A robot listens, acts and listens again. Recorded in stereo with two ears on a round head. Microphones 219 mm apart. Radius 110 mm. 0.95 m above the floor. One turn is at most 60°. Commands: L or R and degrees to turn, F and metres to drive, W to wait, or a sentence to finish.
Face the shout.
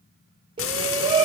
R20
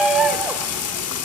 Facing the shout.